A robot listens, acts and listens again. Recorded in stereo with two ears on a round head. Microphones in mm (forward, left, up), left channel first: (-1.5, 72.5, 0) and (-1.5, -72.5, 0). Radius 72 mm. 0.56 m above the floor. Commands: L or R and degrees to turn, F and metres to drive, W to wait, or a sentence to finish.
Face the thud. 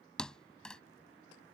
L30
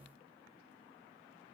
W
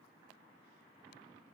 I heard a thud, but can't make it out now. It was about 25° right or 145° left.